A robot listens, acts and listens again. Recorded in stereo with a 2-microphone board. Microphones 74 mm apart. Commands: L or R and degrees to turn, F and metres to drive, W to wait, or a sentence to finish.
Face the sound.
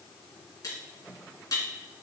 L50
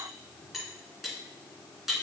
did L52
Found it: cutlery clinking, straight ahead, 2 to 4 m away.